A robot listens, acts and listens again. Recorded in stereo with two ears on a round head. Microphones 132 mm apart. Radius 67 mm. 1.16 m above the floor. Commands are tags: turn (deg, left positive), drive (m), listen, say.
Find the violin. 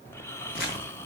<listen/>
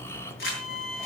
<turn deg="55"/>
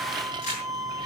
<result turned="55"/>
<say>Found it: a violin, straight ahead.</say>